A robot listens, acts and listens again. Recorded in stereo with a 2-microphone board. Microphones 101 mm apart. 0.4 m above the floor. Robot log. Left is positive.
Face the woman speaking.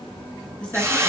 cmd yaw +30
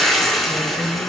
note: So it is at 20° right.
cmd yaw -20
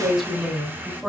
end: Facing the woman speaking.